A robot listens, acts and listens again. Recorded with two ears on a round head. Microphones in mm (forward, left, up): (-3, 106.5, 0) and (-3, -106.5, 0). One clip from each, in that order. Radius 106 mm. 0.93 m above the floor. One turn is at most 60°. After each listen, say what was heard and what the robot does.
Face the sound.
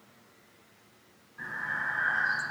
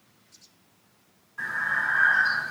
The breathing: about 55° right or 125° right. Turn 55° right.
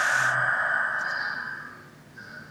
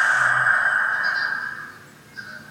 So it is at 70° right. Turn 60° right.
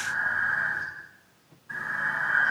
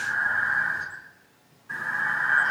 The breathing is now 15° right. Turn 15° right.
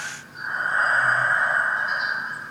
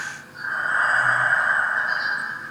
Facing the breathing, over 4 m away.